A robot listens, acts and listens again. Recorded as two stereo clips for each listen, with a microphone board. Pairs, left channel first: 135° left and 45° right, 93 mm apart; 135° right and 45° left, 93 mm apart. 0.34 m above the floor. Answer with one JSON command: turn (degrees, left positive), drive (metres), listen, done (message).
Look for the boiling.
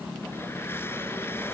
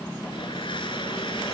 {"listen": true}
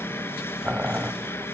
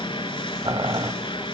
{"turn": 25}
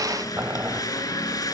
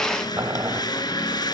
{"turn": 10}
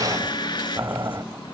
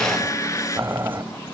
{"done": "Found it: boiling, straight ahead, under 1 m away."}